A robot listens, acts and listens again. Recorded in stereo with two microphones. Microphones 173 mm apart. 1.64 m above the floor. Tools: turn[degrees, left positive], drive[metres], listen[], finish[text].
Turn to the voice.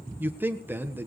Action: turn[-30]
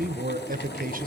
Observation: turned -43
Thought: So it is at 125° right.
Action: turn[-125]
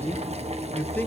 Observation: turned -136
Thought: The man speaking is now 10° left.
Action: turn[10]
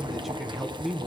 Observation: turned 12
Action: finish[Facing the man speaking, 1 to 2 m away.]